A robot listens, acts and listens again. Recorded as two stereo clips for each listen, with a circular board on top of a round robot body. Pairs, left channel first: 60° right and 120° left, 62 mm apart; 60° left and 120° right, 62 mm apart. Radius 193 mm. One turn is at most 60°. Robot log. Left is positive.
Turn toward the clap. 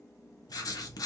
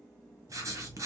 cmd idle
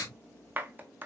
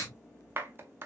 note: The clap: 175° right.
cmd yaw -60
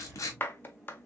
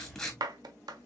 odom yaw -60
note: The clap is now 115° right.
cmd yaw -60
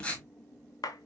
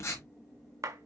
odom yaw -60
note: The clap is now 80° right.
cmd yaw -60
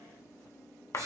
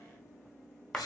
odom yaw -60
note: The clap is now 20° right.
cmd yaw -20
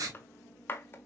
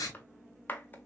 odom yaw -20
end: Found it: a clap, straight ahead.